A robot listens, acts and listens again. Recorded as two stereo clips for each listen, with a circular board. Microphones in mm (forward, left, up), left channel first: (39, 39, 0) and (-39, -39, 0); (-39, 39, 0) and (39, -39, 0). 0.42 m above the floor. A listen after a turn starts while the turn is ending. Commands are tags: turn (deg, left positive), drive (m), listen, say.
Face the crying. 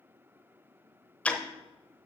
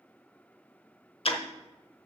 <listen/>
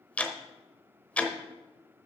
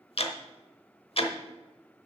<listen/>
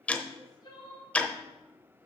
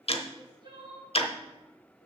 <say>Facing the crying.</say>